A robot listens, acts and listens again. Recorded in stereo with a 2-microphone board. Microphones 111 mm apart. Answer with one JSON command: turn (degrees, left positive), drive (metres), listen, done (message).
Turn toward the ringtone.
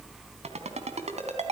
{"turn": -90}
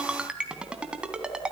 {"turn": -10}
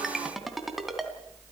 {"done": "Facing the ringtone."}